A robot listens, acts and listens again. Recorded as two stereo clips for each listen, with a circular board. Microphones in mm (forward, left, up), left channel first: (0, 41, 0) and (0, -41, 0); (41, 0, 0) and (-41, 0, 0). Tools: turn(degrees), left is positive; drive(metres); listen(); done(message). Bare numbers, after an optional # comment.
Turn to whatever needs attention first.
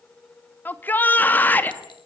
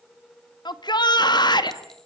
# The shout: 25° left.
turn(25)
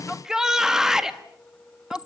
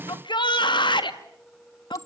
done("Found it: a shout, straight ahead.")